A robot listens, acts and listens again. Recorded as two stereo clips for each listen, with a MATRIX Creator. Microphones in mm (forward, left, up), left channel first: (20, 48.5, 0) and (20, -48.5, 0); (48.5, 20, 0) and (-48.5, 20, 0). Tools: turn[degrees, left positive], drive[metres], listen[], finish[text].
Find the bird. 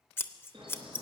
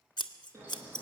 Thought: The bird: 120° right.
Action: turn[-120]
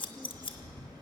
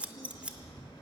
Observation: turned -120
Thought: The bird is now 45° right.
Action: turn[-45]
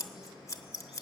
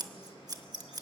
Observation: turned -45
Thought: The bird is now 10° right.
Action: turn[-10]
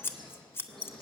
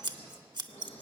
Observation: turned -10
Action: finish[Found it: a bird, straight ahead.]